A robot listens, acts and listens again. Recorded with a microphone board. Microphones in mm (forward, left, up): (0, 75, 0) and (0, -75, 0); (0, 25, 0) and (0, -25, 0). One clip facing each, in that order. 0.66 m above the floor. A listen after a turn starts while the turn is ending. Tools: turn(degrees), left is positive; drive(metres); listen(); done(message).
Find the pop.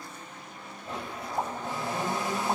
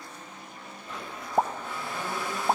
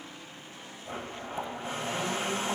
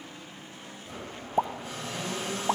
turn(degrees=-45)
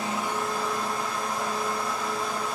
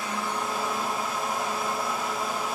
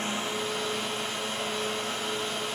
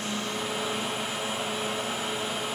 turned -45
listen()
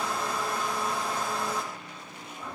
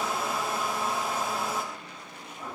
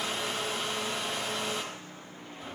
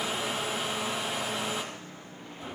done("I heard a pop, but can't make it out now. It was about straight ahead or 90° right.")